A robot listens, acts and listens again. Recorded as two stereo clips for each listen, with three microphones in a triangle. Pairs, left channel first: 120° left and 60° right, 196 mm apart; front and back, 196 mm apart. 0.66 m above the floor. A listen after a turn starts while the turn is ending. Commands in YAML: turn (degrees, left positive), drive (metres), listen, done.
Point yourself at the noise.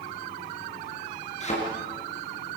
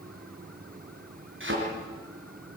turn: 175
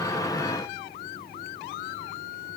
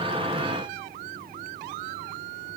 done: "I heard a thud from this way, but can't make it out now."